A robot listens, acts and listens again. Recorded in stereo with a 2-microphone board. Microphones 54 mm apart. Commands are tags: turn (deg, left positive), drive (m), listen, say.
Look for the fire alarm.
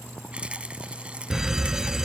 <turn deg="-30"/>
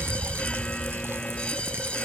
<turn deg="20"/>
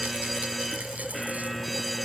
<say>Found it: a fire alarm, straight ahead.</say>